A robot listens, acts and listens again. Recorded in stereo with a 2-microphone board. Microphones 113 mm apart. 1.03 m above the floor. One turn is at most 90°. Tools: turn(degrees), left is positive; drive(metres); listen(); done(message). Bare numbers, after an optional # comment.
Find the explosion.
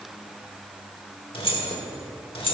listen()
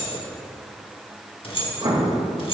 # The explosion: about 45° right or 135° right.
turn(-45)
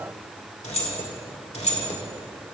listen()
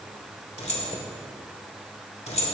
done("I heard an explosion, but can't make it out now. It was about straight ahead or 90° right.")